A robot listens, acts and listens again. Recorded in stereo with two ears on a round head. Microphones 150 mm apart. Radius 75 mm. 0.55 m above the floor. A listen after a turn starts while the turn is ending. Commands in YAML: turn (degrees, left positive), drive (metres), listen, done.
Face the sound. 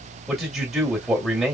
turn: 30
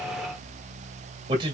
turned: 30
turn: -30
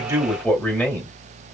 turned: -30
turn: 15
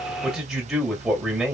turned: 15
done: "Facing the man speaking, 2 to 4 m away."